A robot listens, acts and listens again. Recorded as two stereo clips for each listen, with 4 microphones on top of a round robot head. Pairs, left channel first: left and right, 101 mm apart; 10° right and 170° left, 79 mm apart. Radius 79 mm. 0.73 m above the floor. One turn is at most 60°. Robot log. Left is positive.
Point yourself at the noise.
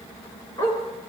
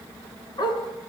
note: The dog barking: 20° left.
cmd yaw +20
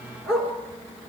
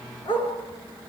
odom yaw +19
end: Found it: a dog barking, straight ahead.